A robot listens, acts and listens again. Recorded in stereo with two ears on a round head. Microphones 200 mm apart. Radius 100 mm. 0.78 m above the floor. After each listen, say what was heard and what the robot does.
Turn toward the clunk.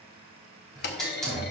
The clunk: about 50° left or 130° left. Turn 50° left.
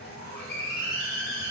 Keep listening.
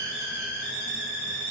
I heard a clunk, but can't make it out now. It was about straight ahead or 80° left.